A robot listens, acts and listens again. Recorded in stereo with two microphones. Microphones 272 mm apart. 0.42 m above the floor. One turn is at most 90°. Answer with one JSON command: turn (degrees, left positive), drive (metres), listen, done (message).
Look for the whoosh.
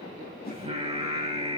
{"turn": 35}
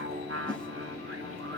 {"listen": true}
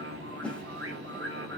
{"done": "Found it: a whoosh, straight ahead, 2 to 4 m away."}